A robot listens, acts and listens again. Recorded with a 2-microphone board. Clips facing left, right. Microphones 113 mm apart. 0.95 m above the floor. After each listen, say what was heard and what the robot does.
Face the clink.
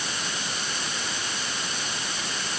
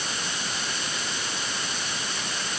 Keep listening.
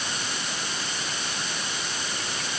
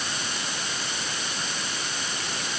Keep listening.
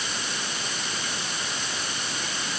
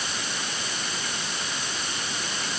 I can't make out a clink to turn to.